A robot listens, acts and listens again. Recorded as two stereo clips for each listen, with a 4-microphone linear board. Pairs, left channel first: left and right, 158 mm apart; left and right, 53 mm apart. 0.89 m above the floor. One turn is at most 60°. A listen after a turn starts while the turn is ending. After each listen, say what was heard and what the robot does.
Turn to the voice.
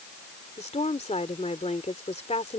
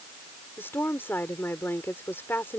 The woman speaking: about 45° left or 135° left. Turn 45° left.
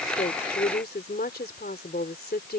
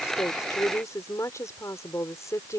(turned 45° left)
So it is at 95° left. Turn 60° left.
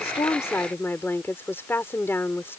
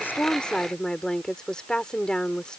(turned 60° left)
The woman speaking is now 15° left. Turn 15° left.
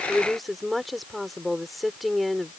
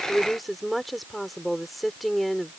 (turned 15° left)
Found it: a woman speaking, straight ahead.